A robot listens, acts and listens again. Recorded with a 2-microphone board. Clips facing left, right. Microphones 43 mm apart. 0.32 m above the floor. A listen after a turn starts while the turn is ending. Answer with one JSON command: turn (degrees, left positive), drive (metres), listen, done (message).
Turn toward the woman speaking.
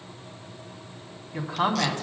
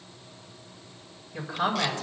{"turn": 65}
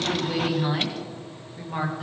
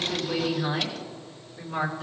{"turn": 30}
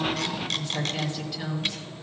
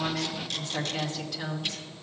{"done": "Facing the woman speaking."}